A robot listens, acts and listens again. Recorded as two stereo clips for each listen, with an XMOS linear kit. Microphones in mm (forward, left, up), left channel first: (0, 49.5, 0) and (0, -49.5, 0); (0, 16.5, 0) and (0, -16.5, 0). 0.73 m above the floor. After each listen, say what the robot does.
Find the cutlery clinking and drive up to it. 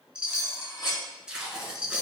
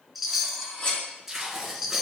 Turn 50° left.
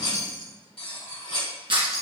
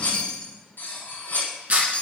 Turn 80° left.
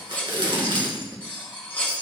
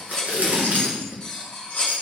Turn 15° left.
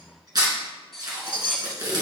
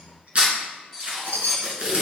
Drive 1.0 m forward.
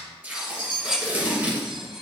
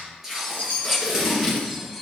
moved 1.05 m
Turn 10° right.
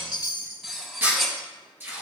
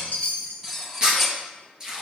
Drive 1.0 m forward.
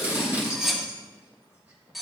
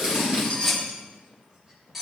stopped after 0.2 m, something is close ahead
Arrived at the cutlery clinking, straight ahead.